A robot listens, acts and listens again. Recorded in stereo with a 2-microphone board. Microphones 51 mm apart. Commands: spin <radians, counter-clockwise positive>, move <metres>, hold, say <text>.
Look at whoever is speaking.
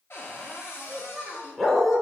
spin -0.52
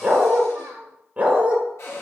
spin -2.09
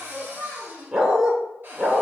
spin 0.26
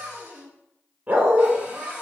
say Found it: a child speaking, straight ahead, 1 to 2 m away.